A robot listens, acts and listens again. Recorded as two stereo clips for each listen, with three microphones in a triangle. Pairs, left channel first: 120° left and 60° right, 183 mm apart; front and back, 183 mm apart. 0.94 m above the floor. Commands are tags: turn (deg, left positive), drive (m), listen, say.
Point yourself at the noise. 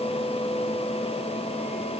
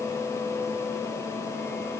<listen/>
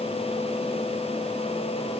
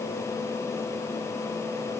<listen/>
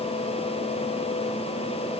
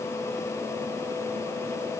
<say>I can't make out anything.</say>